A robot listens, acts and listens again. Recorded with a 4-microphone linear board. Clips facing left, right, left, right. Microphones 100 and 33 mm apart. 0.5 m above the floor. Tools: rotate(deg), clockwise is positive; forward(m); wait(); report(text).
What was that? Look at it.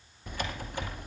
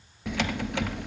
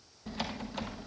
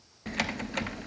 rotate(90)
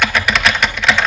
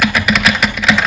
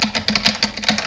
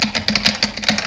report("Facing the typing on a keyboard, 1 to 2 m away.")